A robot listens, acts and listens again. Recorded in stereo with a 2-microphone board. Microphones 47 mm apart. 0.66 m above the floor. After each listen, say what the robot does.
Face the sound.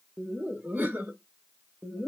Turn 30° right.
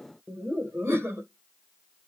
Turn 130° right.
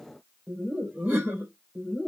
Turn 40° right.
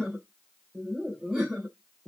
Turn 10° right.
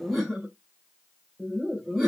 Found it: laughter, straight ahead.